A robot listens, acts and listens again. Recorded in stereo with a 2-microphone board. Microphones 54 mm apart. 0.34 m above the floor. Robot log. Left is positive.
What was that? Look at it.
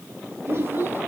note: The child speaking: about 45° right or 135° right.
cmd yaw -45
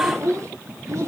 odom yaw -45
note: So it is at 120° right.
cmd yaw -120
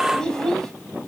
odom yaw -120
note: The child speaking is now 10° left.
cmd yaw +10
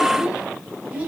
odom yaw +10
note: The child speaking is now 25° right.
cmd yaw -25
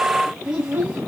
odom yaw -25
note: The child speaking is now 25° right.
cmd yaw -25
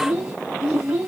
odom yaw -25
end: Found it: a child speaking, straight ahead, 1 to 2 m away.